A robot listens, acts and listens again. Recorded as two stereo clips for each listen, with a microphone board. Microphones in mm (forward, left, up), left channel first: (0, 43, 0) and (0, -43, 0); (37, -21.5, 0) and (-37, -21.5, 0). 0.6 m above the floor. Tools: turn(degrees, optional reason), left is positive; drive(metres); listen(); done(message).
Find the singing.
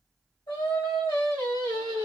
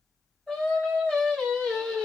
turn(degrees=90, reason="The singing: 90° left.")
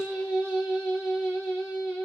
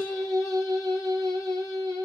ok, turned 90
done("Facing the singing, 2 to 4 m away.")